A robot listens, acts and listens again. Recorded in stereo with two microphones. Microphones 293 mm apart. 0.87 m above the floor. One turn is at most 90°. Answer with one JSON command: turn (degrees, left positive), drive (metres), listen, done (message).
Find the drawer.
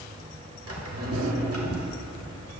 {"turn": -55}
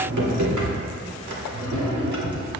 {"turn": -75}
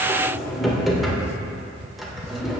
{"done": "Found it: a drawer, straight ahead, 1 to 2 m away."}